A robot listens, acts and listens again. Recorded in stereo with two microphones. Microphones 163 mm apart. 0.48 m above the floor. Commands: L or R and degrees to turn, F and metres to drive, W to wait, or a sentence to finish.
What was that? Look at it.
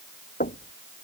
L60
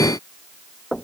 Found it: knocking, straight ahead.